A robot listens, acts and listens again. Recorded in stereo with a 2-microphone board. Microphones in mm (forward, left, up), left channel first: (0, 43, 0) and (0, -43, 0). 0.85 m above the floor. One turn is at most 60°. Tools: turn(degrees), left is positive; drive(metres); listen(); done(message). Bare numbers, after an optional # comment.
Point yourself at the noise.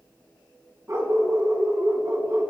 # The dog barking: about 35° right or 145° right.
turn(-35)
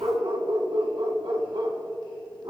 # So it is at 105° right.
turn(-60)
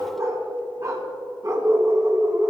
# The dog barking is now 40° right.
turn(-40)
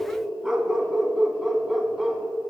done("Found it: a dog barking, straight ahead.")